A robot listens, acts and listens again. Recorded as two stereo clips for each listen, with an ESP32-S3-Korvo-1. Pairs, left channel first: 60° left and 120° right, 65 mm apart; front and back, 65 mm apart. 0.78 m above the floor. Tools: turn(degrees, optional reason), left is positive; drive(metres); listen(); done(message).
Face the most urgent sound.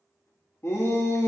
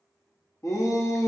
turn(degrees=20, reason="The shout: 20° left.")
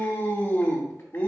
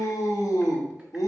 done("Found it: a shout, straight ahead, under 1 m away.")